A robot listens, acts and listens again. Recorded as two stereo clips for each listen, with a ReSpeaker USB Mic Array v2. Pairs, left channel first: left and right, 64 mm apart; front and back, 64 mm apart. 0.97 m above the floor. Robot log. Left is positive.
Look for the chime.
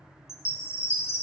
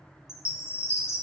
note: The chime: 45° left.
cmd yaw +45
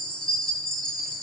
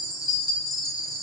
note: The chime is now 15° left.
cmd yaw +15
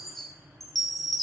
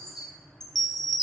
end: Facing the chime.